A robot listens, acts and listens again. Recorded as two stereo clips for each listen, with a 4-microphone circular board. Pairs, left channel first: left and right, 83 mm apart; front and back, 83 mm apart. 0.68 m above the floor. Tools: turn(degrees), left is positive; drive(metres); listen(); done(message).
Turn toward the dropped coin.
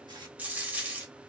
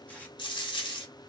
turn(degrees=-20)
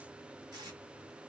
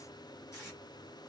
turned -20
done("Facing where the dropped coin came from. I can't hear it now.")